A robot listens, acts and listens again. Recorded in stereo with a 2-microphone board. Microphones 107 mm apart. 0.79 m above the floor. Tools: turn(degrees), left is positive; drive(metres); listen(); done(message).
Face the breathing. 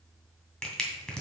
listen()
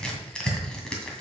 listen()
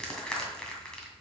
done("I can't make out breathing, only crushing.")